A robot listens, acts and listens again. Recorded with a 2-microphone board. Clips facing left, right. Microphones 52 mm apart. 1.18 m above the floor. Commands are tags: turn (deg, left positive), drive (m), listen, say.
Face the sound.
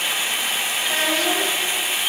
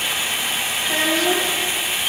<turn deg="-30"/>
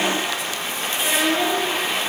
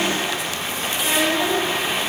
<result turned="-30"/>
<turn deg="30"/>
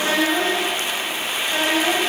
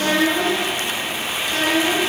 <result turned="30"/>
<turn deg="15"/>
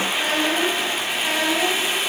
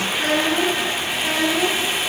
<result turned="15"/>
<say>Found it: a child speaking, straight ahead, over 4 m away.</say>